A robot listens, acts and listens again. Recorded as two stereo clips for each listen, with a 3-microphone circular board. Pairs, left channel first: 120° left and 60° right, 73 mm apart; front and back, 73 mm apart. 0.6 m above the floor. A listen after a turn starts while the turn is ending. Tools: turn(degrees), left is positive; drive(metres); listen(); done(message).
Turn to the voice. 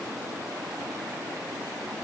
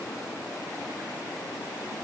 listen()
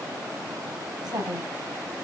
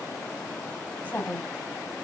turn(degrees=-65)
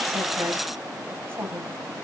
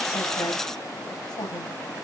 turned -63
done("Facing the woman speaking, 2 to 4 m away.")